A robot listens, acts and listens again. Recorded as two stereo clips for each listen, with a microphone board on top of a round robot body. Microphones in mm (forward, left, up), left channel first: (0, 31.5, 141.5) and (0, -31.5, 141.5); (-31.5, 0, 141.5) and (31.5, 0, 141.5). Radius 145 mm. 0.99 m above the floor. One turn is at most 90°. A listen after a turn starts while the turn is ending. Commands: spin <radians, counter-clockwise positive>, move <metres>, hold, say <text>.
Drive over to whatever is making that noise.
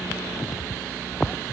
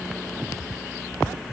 hold
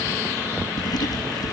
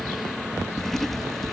spin 1.57
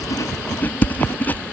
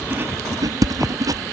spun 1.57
spin 0.52
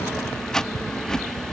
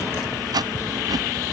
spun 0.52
spin 0.17
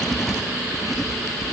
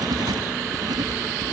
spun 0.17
move 1.0
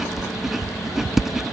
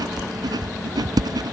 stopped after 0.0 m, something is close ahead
say Blocked. The writing is further on, straight ahead.